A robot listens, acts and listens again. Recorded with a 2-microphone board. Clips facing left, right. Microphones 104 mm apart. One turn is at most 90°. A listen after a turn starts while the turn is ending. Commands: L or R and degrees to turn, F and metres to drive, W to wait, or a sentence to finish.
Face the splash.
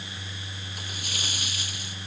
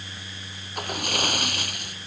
R60
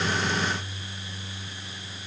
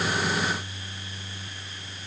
W
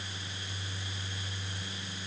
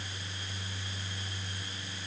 I heard a splash, but can't make it out now. It was about straight ahead or 60° right.